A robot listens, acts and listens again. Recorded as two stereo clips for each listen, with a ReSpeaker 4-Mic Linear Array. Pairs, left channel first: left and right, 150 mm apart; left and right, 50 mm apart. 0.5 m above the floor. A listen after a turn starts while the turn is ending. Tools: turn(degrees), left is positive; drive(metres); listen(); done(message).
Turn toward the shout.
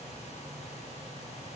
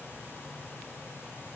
listen()
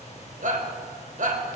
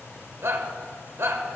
turn(degrees=-60)
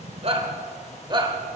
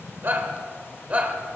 turn(degrees=-40)
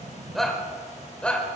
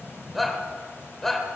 done("Facing the shout.")